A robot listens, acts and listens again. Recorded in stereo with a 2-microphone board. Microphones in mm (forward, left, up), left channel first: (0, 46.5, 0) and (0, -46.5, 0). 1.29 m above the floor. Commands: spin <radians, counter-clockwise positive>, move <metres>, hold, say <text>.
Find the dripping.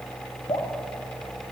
spin 1.31
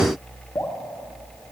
spin 0.52
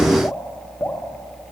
spin 0.44
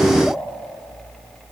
hold
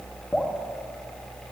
say Found it: dripping, straight ahead, 1 to 2 m away.